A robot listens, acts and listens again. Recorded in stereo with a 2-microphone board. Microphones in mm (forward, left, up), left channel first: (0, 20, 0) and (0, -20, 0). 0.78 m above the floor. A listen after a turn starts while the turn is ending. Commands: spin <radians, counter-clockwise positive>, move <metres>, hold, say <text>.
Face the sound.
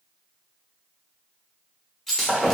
spin 0.52
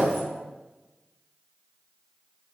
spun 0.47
hold
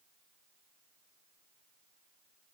say I heard breaking glass, but can't make it out now. It was about 15° right or 140° left.